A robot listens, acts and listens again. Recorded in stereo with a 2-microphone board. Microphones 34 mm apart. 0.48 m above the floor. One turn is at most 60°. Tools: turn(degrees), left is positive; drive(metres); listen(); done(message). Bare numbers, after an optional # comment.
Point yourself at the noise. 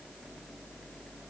listen()
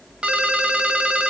# The ringtone: about 35° right or 145° right.
turn(-35)
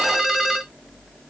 # So it is at 10° right.
turn(-10)
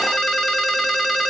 done("Facing the ringtone.")